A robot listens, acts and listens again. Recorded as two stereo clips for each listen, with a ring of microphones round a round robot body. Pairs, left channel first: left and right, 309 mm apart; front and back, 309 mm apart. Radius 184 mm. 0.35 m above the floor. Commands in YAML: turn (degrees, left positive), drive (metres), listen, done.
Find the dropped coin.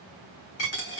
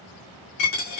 turn: 40
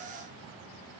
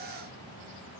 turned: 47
done: "I heard a dropped coin from this way, but can't make it out now."